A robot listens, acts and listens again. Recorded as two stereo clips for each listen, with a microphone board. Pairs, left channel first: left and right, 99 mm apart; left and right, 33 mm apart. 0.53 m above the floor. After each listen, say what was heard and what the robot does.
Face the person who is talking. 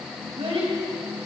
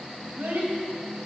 The child speaking: about 75° right or 105° right. Turn 75° right.
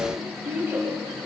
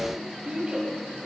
So it is at 25° right. Turn 25° right.
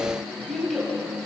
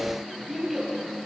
Facing the child speaking.